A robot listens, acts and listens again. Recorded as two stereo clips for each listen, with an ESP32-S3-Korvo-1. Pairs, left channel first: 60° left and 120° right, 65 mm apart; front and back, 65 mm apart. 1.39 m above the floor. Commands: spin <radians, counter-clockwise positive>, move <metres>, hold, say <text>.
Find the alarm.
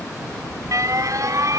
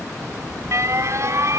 spin -2.53
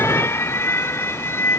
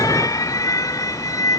spin 0.17
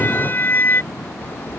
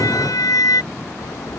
say Found it: an alarm, straight ahead.